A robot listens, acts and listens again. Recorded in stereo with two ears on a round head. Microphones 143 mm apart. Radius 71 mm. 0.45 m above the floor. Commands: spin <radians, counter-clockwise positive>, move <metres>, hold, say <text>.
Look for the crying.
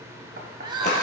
spin -0.52
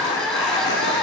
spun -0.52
say Found it: crying, straight ahead, 1 to 2 m away.